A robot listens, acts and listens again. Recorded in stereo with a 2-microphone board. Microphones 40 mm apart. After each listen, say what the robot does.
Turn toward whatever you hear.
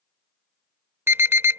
Turn 60° right.
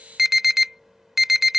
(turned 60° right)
Found it: an alarm, straight ahead.